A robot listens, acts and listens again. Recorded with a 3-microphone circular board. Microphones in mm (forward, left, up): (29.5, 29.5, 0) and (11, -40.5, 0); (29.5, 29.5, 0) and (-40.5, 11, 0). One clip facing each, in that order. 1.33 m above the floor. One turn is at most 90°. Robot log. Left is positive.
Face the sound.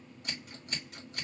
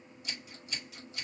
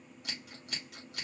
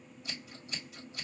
note: The scissors: 35° left.
cmd yaw +35
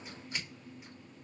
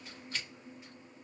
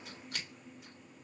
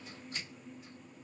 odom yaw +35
end: Found it: scissors, straight ahead, 2 to 4 m away.